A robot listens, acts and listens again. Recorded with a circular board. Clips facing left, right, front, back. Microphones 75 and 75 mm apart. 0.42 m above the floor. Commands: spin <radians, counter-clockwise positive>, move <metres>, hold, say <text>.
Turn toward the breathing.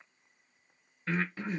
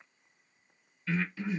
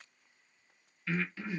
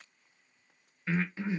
spin 2.09
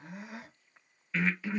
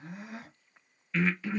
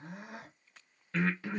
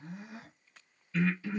say Facing the breathing.